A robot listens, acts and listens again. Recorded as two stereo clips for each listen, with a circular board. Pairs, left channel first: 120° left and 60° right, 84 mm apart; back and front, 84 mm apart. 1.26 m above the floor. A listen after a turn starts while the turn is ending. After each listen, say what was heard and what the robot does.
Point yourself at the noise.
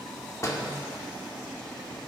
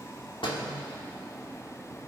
The door slam: 170° left. Turn 170° left.
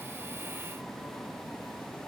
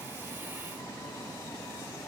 Facing where the door slam came from. I can't hear it now.